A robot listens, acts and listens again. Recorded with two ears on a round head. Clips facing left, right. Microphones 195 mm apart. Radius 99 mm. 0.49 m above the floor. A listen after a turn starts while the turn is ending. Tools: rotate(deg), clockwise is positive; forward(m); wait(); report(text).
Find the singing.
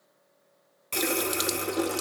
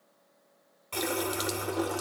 wait()
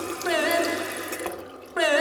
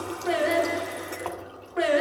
rotate(-65)
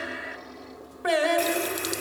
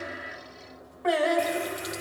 rotate(-45)
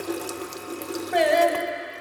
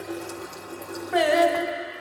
report("Found it: singing, straight ahead, 1 to 2 m away.")